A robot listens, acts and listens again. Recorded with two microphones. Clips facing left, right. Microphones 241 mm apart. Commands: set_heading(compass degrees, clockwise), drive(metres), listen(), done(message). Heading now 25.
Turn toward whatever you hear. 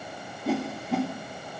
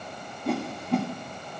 set_heading(355)
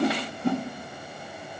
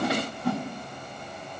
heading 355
set_heading(205)
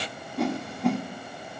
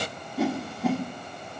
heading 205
done("Facing the whoosh.")